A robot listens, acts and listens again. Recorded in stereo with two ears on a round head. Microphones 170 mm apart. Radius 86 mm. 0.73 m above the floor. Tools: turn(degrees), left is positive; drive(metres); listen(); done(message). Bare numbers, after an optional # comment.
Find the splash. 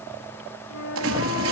turn(-90)
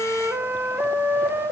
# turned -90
done("I heard a splash from this way, but can't make it out now.")